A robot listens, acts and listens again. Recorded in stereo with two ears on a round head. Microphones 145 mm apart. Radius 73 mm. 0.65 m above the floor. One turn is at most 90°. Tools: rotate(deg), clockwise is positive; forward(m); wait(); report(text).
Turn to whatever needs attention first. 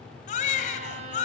rotate(-50)
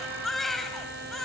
report("Facing the baby crying.")